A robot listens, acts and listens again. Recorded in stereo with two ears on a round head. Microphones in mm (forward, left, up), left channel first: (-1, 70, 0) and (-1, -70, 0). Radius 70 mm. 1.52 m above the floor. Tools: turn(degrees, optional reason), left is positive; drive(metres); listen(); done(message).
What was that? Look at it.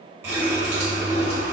turn(degrees=-20, reason="The running tap: about 20° right or 160° right.")
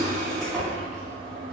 done("Facing the running tap.")